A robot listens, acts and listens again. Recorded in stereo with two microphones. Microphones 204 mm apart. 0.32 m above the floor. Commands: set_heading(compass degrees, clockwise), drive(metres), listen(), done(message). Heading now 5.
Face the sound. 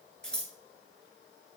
set_heading(335)
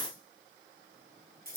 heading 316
set_heading(1)
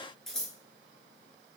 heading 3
done("Facing the scissors, 1 to 2 m away.")